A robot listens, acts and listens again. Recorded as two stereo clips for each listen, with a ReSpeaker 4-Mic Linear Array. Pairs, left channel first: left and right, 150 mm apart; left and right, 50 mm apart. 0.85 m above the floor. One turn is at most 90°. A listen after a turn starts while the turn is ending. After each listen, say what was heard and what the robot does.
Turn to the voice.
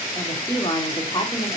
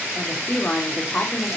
The woman speaking: about 30° left or 150° left. Turn 30° left.
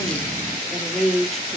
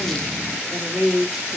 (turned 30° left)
Facing the woman speaking, 1 to 2 m away.